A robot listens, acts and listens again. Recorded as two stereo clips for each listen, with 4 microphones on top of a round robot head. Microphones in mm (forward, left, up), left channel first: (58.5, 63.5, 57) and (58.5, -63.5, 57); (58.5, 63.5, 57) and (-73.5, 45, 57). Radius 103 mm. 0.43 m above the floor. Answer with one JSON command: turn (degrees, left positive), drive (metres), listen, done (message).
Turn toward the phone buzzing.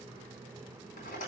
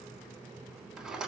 {"listen": true}
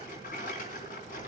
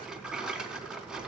{"listen": true}
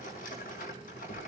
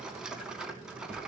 {"done": "I can't make out a phone buzzing to turn to."}